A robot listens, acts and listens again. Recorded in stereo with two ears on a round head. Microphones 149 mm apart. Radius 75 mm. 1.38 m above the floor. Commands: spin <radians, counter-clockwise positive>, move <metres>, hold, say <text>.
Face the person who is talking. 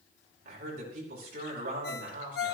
spin -0.96
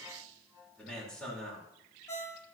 say Found it: a man speaking, straight ahead.